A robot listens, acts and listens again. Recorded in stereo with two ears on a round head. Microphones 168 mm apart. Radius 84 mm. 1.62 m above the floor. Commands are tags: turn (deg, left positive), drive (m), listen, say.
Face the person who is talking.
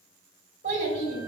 <turn deg="-50"/>
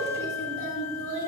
<turn deg="-75"/>
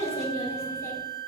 <turn deg="20"/>
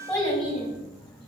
<say>Found it: a child speaking, straight ahead.</say>